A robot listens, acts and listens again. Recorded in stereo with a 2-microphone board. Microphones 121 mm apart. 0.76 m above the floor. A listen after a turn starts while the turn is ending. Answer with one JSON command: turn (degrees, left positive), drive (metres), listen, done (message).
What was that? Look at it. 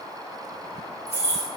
{"turn": -70}
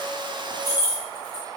{"turn": -20}
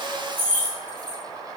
{"turn": 15}
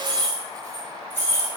{"turn": 15}
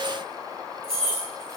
{"done": "Facing the keys jangling, 2 to 4 m away."}